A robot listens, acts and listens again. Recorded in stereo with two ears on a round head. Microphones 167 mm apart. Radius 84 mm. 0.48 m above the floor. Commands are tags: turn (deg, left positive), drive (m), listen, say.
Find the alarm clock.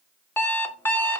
<turn deg="30"/>
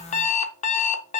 <turn deg="140"/>
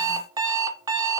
<turn deg="-20"/>
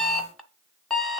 <say>Facing the alarm clock.</say>